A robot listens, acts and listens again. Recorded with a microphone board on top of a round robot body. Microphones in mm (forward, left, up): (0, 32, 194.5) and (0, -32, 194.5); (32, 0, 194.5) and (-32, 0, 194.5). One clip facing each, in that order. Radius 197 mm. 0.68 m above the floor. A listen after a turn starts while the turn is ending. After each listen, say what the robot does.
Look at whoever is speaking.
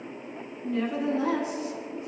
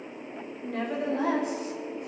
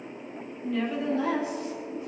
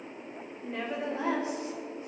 Turn 120° right.
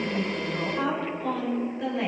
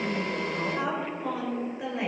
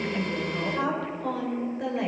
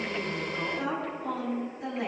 Turn 10° right.
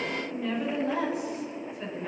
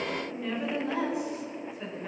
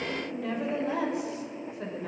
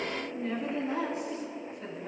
Found it: a woman speaking, straight ahead.